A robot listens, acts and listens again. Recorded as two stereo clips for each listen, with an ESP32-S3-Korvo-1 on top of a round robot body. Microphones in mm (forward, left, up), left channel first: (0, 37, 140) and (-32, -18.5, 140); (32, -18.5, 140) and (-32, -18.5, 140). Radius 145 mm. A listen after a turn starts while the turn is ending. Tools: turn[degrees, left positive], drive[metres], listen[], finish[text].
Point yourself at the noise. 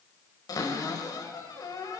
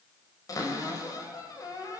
Thought: The cupboard door: 35° left.
Action: turn[35]
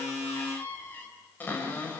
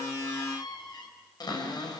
Action: finish[Found it: a cupboard door, straight ahead, over 4 m away.]